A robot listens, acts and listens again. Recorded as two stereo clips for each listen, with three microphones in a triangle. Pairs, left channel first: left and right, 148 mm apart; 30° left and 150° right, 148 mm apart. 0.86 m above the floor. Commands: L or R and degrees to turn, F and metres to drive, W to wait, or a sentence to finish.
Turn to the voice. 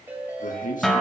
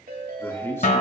L100
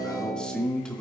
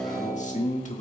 Facing the man speaking, 1 to 2 m away.